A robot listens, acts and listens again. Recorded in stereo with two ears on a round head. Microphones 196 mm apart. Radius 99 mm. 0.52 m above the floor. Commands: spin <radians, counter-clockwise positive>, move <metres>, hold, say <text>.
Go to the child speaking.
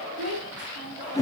spin -1.31
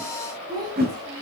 spin -0.35
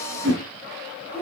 move 1.0
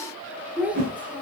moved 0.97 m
move 1.0
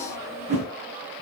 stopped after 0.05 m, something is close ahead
hold
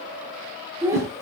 spin -0.26
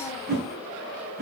hold
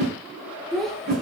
say I am next to the child speaking.